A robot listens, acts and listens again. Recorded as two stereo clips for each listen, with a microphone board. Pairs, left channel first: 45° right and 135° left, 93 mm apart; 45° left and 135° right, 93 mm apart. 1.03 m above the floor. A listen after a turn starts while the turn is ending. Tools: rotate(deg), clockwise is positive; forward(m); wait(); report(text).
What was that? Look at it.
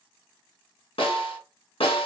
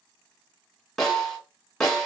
rotate(40)
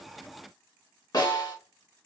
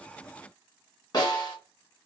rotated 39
report("Facing the snare drum.")